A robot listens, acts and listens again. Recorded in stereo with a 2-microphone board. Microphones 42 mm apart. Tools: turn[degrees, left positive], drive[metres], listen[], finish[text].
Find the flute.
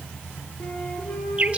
Thought: The flute: about 45° left or 135° left.
Action: turn[45]
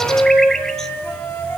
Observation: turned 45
Thought: So it is at 90° left.
Action: turn[90]
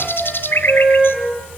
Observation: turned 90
Action: finish[Facing the flute, over 4 m away.]